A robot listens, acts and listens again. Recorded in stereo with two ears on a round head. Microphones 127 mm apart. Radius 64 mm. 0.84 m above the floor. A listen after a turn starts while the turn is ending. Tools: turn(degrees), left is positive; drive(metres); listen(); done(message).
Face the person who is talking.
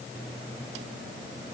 listen()
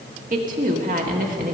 turn(degrees=-55)
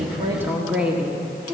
turn(degrees=-10)
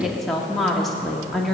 done("Found it: a woman speaking, straight ahead.")